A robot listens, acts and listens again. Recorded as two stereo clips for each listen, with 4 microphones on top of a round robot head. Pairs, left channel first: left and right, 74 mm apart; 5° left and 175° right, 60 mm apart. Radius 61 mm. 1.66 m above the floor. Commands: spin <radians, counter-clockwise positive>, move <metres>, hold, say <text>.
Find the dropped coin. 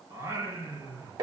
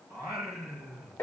hold
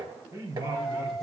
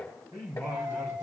spin 3.05
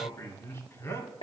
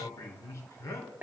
say I heard a dropped coin from this way, but can't make it out now.